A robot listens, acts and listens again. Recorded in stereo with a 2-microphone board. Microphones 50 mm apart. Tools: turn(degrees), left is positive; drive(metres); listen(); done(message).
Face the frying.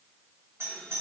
listen()
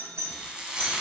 turn(degrees=-15)
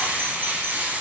turn(degrees=-150)
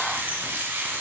turn(degrees=-40)
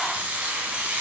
turn(degrees=-30)
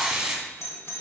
turn(degrees=-15)
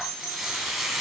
done("Found it: frying, straight ahead, 1 to 2 m away.")